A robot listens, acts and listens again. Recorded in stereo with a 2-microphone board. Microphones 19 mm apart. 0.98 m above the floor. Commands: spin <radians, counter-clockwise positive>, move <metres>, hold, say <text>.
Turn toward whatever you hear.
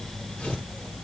spin 1.57
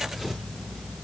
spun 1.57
say Found it: tearing paper, straight ahead.